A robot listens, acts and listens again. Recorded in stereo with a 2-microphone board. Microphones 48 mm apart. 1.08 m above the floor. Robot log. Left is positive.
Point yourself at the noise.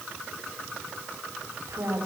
cmd yaw -90
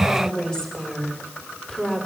note: So it is at 10° left.
cmd yaw +10
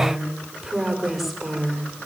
end: Found it: a woman speaking, straight ahead, over 4 m away.